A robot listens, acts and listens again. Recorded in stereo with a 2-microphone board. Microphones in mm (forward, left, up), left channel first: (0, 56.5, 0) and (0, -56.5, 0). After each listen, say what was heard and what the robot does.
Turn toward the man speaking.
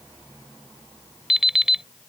Keep listening.
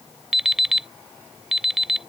Keep listening.
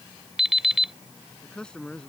Turn 30° left.
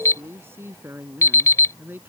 So it is at 20° right. Turn 20° right.
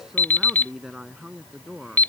Facing the man speaking.